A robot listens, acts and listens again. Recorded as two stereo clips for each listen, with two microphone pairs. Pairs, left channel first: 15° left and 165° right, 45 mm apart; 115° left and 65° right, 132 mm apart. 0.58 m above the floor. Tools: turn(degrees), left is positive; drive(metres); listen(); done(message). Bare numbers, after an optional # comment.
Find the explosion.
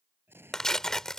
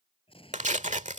# The explosion: 165° left.
turn(165)
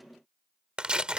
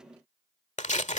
done("I heard an explosion from this way, but can't make it out now.")